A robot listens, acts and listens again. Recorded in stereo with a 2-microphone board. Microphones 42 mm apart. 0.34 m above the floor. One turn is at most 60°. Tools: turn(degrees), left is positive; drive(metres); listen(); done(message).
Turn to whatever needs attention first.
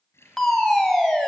turn(degrees=30)
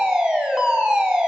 turn(degrees=-20)
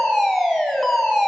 done("Found it: a fire alarm, straight ahead, 2 to 4 m away.")